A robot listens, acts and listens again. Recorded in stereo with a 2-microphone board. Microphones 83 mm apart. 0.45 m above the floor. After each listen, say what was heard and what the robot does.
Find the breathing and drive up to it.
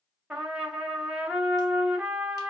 Keep listening.
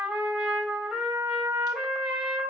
Keep listening.
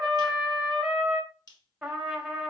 I can't make out breathing, only a trumpet and a finger snap.